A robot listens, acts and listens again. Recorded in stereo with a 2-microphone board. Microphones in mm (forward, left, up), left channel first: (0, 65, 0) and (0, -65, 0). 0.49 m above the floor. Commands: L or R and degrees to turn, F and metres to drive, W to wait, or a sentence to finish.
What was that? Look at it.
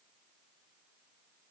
W
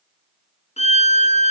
L55
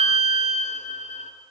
L65
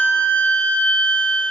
L10
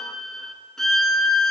Facing the violin.